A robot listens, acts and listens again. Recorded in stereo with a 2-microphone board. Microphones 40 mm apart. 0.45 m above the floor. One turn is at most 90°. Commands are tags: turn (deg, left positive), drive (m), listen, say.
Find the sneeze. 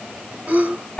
<turn deg="-40"/>
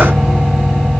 <listen/>
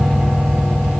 <say>I heard a sneeze, but can't make it out now. It was about straight ahead or 100° right.</say>